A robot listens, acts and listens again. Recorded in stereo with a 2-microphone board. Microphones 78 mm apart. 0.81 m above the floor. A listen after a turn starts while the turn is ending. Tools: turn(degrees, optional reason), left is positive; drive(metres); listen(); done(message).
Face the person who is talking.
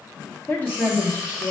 turn(degrees=25, reason="The woman speaking: about 25° left or 155° left.")
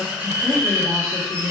done("Found it: a woman speaking, straight ahead, 1 to 2 m away.")